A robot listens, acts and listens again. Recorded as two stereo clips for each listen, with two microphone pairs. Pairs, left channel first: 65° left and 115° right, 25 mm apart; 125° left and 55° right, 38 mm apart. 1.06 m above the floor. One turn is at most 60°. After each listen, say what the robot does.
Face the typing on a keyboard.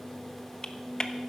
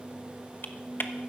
Turn 60° left.
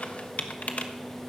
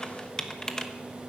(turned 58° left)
Turn 60° left.
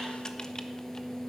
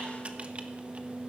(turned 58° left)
Keep listening.
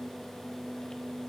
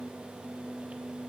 Keep listening.
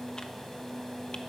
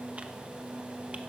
Facing where the typing on a keyboard came from. I can't hear it now.